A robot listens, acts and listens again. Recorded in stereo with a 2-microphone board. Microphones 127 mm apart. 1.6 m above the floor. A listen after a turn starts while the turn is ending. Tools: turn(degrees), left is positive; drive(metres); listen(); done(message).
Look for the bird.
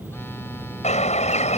turn(degrees=60)
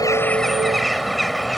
done("Facing the bird.")